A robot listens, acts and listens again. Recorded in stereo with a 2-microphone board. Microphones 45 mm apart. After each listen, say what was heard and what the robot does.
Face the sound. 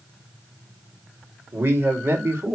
The man speaking: about 75° right or 105° right. Turn 75° right.
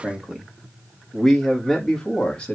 So it is at 20° left. Turn 20° left.
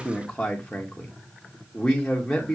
The man speaking is now 15° left. Turn 15° left.
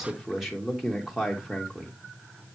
Facing the man speaking.